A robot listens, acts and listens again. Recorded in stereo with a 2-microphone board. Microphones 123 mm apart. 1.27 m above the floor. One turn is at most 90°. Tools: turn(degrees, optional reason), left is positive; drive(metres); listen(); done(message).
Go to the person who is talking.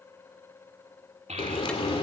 turn(degrees=-70, reason="The child speaking: about 70° right or 110° right.")
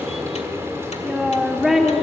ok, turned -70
drive(metres=1.0)
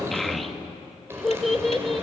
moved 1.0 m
drive(metres=1.0)
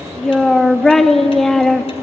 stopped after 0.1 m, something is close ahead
done("Arrived at the child speaking, straight ahead.")